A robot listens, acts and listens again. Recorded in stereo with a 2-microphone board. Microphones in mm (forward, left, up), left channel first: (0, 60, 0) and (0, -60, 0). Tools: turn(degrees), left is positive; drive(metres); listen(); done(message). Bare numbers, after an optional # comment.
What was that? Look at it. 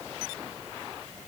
listen()
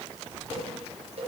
# The cowbell: about 55° right or 125° right.
turn(-55)
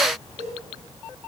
# So it is at 65° right.
turn(-65)
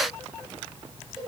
listen()
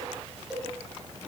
done("Facing the cowbell.")